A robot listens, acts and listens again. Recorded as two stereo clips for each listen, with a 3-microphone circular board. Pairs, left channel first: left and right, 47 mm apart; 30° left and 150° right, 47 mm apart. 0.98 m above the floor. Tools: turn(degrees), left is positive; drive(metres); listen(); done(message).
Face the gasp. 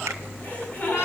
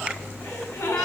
turn(degrees=35)
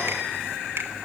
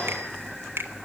done("I heard a gasp from this way, but can't make it out now.")